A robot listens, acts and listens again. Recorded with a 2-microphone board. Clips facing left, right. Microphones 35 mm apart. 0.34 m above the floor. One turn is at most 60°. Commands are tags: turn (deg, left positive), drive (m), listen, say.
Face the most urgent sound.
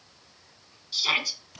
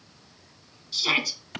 <turn deg="30"/>
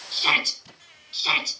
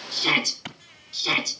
<turn deg="60"/>
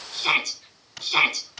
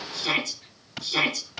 <turn deg="60"/>
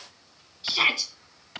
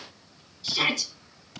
<turn deg="20"/>
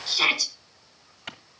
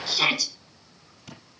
<say>Found it: a shout, straight ahead.</say>